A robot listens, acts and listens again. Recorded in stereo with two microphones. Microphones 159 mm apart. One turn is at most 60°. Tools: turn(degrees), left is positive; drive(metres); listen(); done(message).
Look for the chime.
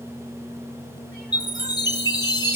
turn(degrees=25)
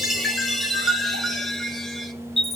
done("Found it: a chime, straight ahead.")